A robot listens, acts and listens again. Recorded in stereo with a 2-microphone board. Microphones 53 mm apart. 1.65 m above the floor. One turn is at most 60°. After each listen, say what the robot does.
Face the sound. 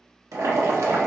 Turn 60° right.
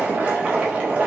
Turn 25° right.
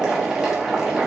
Turn 10° right.
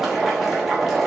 Facing the boiling.